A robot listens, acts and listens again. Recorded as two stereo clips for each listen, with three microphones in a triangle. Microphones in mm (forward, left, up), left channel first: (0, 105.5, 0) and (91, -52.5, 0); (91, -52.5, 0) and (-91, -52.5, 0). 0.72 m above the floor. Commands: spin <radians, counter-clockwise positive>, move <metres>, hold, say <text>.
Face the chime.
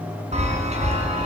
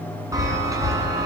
spin -1.92
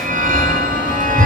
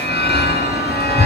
spin -0.35
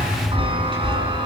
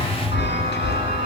say Facing the chime.